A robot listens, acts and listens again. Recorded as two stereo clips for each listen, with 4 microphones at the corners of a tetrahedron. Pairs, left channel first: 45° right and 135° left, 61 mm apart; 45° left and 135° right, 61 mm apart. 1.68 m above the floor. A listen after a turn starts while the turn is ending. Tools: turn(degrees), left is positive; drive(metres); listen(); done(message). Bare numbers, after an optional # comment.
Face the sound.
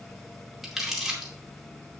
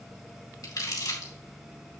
# The crumpling: 50° left.
turn(50)
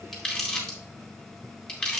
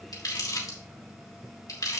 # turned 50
# The crumpling is now 30° left.
turn(30)
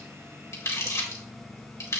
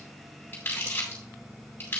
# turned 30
# The crumpling is now 10° right.
turn(-10)
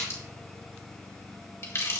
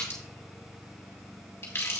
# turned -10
done("Found it: crumpling, straight ahead, 2 to 4 m away.")